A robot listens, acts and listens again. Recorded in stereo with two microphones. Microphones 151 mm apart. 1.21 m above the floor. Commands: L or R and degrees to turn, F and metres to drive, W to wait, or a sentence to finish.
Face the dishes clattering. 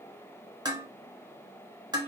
R25
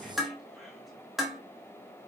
Found it: dishes clattering, straight ahead, 1 to 2 m away.